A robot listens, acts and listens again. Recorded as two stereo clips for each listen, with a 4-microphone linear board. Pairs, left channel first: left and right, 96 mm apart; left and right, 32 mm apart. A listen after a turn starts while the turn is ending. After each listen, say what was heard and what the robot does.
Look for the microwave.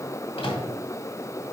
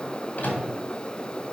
The microwave: about 70° left or 110° left. Turn 70° left.
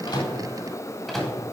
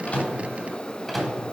Found it: a microwave, straight ahead.